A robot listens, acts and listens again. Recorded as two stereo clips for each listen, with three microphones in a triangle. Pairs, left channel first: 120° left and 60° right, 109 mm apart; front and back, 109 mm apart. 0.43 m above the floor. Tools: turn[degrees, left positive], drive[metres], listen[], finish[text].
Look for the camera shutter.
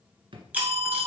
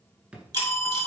Thought: The camera shutter: 135° right.
Action: turn[-135]
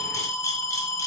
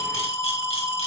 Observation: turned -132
Action: listen[]
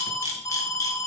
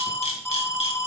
Action: finish[Found it: a camera shutter, straight ahead.]